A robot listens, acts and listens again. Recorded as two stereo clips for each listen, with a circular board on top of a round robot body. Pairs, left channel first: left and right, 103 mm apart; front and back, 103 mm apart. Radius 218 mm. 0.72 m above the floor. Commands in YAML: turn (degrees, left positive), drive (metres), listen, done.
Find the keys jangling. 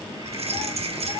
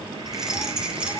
turn: -100
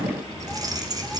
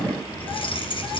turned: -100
turn: -35
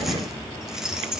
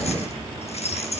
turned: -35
done: "Facing the keys jangling, 2 to 4 m away."